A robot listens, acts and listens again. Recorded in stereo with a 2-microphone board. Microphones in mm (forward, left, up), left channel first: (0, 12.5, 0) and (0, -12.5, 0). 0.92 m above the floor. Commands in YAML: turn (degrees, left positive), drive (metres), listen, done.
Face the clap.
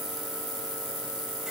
listen: true
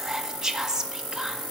listen: true
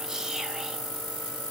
done: "I can't make out a clap, only whispering."